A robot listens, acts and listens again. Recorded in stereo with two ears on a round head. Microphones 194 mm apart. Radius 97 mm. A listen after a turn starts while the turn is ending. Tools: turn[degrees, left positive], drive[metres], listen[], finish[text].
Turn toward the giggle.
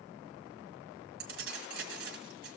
Action: listen[]
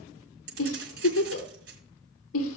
Action: turn[90]
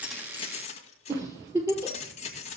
Thought: So it is at 15° right.
Action: turn[-15]
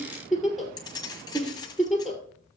Action: finish[Found it: a giggle, straight ahead.]